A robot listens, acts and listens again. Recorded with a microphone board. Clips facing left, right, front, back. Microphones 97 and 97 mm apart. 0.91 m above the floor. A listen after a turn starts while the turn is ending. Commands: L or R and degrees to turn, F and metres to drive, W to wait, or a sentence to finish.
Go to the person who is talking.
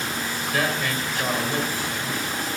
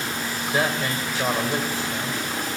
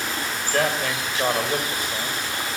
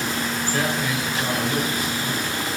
R25
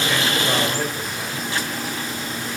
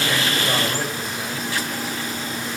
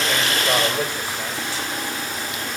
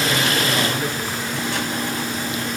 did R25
W
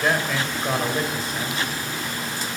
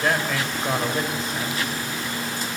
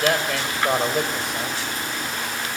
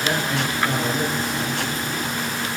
F1.0
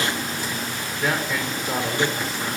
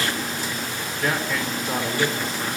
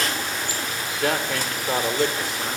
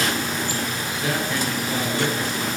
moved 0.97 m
F1.0
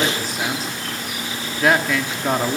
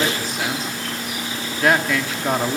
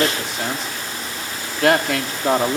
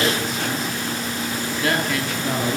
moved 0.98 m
F1.0
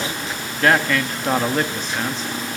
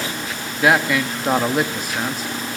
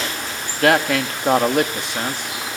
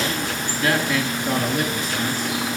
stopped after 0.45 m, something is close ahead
R10
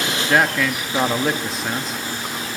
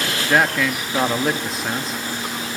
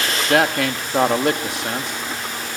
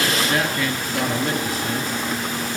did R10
Arrived at the man speaking, straight ahead.